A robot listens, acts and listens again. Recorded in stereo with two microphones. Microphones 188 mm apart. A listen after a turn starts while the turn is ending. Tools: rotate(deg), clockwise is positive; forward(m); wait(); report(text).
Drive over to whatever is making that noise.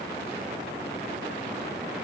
wait()
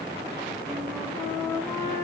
rotate(-30)
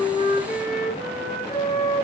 rotate(-135)
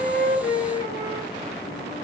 rotate(-40)
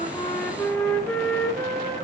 forward(1.0)
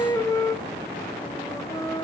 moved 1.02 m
rotate(-15)
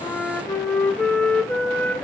forward(1.0)
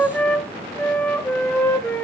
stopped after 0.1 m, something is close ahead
rotate(-10)
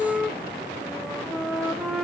report("I am next to the flute.")